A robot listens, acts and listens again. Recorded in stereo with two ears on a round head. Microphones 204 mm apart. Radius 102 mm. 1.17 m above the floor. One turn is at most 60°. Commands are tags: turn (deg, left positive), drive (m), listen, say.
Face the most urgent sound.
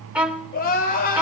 <turn deg="40"/>
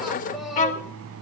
<say>Facing the crying, over 4 m away.</say>